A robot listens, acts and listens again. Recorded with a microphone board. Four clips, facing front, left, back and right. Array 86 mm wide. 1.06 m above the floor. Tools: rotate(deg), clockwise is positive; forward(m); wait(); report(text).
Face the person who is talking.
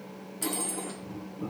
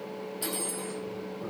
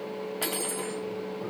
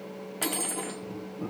wait()
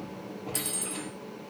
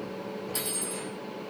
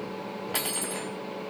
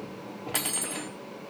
wait()
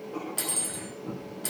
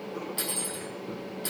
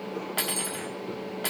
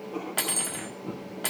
report("I can't make out anyone speaking, only cutlery clinking and writing.")